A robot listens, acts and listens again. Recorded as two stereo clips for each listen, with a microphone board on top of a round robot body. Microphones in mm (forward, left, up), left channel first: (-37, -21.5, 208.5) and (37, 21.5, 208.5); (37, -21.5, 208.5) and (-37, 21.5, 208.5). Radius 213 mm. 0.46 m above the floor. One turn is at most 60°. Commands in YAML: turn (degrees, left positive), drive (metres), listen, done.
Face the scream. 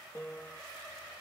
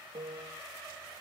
listen: true
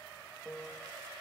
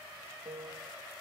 listen: true
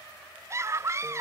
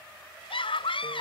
turn: -25
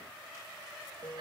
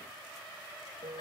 listen: true
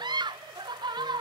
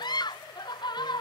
done: "Found it: a scream, straight ahead."